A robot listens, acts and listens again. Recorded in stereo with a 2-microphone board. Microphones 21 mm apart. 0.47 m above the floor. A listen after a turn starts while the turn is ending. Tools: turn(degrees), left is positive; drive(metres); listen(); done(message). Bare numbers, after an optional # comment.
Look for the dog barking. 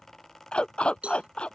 # The dog barking: about 50° left or 130° left.
turn(50)
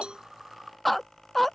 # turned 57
done("Found it: a dog barking, straight ahead.")